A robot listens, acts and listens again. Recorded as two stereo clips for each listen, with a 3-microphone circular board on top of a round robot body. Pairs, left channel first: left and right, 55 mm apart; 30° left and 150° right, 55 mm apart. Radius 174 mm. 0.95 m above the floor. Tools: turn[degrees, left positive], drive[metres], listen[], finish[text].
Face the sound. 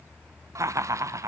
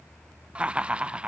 Thought: The laughter: 80° right.
Action: turn[-80]
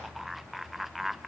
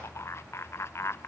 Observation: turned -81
Action: finish[Found it: laughter, straight ahead.]